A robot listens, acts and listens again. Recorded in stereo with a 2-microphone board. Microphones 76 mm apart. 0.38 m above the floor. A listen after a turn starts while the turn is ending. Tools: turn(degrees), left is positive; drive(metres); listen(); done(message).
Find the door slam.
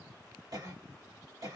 listen()
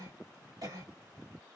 listen()
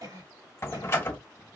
turn(degrees=30)
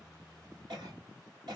listen()
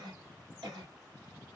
done("I heard a door slam, but can't make it out now. It was about straight ahead or 120° left.")